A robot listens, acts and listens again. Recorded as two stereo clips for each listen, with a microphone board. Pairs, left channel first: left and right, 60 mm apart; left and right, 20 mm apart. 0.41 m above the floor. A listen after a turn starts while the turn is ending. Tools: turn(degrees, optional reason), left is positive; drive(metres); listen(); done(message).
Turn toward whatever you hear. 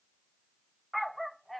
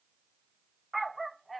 turn(degrees=30)
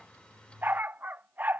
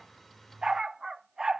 turn(degrees=-30, reason="So it is at 30° right.")
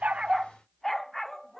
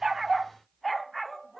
done("Found it: a dog barking, straight ahead.")